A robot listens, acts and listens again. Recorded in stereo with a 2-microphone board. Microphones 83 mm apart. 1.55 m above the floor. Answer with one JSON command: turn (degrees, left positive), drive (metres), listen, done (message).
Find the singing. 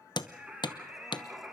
{"turn": -30}
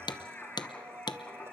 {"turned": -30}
{"turn": 15}
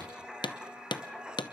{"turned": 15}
{"done": "Facing the singing, 2 to 4 m away."}